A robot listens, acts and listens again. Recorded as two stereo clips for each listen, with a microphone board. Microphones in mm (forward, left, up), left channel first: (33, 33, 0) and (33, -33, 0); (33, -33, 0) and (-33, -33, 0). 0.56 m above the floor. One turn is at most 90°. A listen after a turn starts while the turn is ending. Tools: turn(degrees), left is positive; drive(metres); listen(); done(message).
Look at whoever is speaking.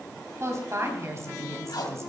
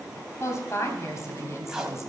turn(degrees=-45)
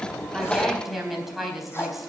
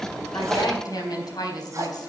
done("Found it: a woman speaking, straight ahead, 2 to 4 m away.")